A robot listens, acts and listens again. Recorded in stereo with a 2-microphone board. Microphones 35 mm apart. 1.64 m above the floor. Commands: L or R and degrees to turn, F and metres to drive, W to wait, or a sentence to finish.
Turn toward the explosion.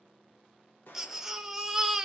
L70
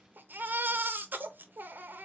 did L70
W
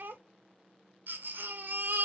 I heard an explosion, but can't make it out now. It was about straight ahead or 40° left.